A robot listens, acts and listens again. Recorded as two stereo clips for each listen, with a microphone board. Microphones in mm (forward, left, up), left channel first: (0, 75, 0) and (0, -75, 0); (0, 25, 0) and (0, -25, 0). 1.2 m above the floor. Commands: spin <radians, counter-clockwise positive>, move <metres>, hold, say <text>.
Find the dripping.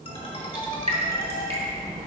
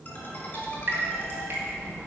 spin -0.79
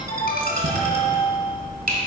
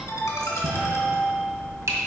spin -1.57
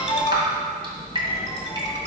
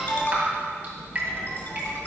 spin -0.52
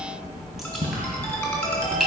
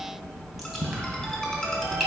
say Found it: dripping, straight ahead.